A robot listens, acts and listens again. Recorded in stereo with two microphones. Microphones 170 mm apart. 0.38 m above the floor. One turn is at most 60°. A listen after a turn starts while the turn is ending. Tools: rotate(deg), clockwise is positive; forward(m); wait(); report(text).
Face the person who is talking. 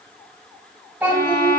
rotate(30)
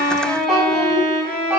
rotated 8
rotate(30)
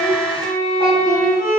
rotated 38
rotate(-25)
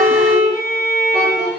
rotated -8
rotate(-15)
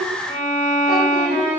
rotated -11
wait()
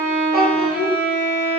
report("Facing the child speaking.")